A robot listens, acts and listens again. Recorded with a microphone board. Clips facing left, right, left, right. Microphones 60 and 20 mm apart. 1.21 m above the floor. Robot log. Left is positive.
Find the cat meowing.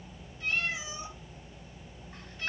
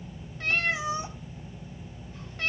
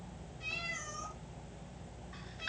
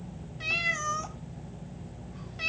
note: The cat meowing: about 70° right or 110° right.
cmd yaw -70
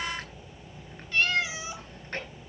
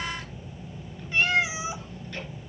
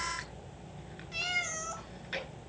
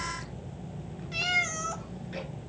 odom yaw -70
note: So it is at 20° right.
cmd yaw -20
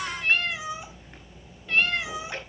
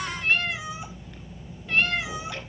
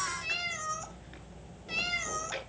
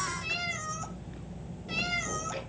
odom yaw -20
end: Facing the cat meowing.